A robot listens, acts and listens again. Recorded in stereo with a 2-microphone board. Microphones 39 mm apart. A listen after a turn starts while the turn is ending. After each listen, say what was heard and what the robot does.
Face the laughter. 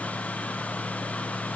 Keep listening.
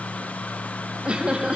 The laughter: about 25° right or 155° right. Turn 25° right.
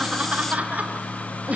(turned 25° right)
The laughter: about 40° right or 140° right. Turn 40° right.
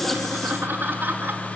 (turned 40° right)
So it is at 110° right. Turn 110° right.
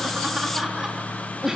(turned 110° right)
The laughter is now 15° right. Turn 15° right.
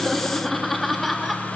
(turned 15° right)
Found it: laughter, straight ahead, 2 to 4 m away.